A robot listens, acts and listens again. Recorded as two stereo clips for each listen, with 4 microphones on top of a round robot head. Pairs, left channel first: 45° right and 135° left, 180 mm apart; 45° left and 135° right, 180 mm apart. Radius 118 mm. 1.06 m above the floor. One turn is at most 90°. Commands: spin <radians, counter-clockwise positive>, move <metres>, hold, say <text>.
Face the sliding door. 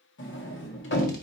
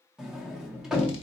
spin -0.79
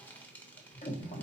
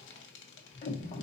say Found it: a sliding door, straight ahead, 1 to 2 m away.